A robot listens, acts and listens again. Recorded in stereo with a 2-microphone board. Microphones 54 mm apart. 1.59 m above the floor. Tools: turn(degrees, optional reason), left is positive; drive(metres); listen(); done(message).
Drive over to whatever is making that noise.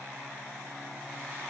listen()
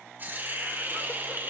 turn(degrees=-35, reason="The hiss: about 35° right or 145° right.")
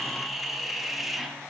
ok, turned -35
drive(metres=1.0)
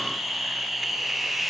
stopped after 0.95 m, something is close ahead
done("I am next to the hiss.")